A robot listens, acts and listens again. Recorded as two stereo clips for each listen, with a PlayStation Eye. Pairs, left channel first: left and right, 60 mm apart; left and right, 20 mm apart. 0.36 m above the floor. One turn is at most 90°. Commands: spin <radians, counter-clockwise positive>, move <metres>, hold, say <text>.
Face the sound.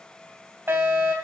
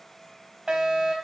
spin -0.79
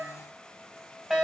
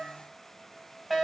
spin -0.17
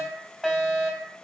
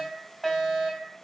say Facing the fire alarm, 2 to 4 m away.